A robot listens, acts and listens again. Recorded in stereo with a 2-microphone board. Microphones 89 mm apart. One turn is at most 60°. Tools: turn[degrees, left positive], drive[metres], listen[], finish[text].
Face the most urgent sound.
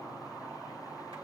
Action: listen[]
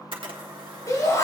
Thought: The shout: about 35° left or 145° left.
Action: turn[35]
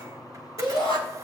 Thought: So it is at 105° left.
Action: turn[60]
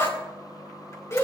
Thought: The shout is now 35° left.
Action: turn[35]
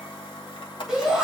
Thought: The shout is now 10° right.
Action: turn[-10]
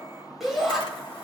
Action: finish[Facing the shout.]